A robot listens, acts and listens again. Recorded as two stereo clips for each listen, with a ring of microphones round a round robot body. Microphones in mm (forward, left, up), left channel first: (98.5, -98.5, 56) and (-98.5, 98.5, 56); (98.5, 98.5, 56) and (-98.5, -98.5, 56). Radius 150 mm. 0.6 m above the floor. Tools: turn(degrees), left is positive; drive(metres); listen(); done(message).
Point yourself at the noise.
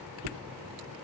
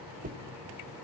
turn(degrees=160)
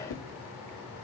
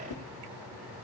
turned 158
done("Facing the whoosh, 1 to 2 m away.")